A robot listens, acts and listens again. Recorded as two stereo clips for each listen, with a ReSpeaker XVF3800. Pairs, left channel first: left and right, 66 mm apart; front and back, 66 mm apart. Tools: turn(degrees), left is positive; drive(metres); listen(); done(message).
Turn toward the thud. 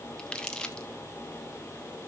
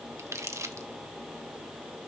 listen()
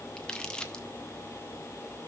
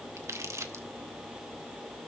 listen()
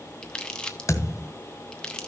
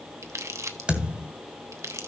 turn(degrees=110)
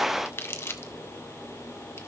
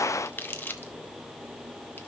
done("I heard a thud from this way, but can't make it out now.")